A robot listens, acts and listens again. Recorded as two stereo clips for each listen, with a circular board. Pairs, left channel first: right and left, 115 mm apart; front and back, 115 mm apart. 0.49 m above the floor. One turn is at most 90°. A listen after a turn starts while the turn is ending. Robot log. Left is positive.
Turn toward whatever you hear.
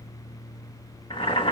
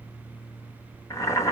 note: The boiling: 55° right.
cmd yaw -55
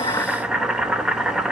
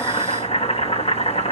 note: The boiling is now 10° left.
cmd yaw +10
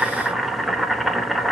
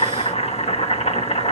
end: Facing the boiling.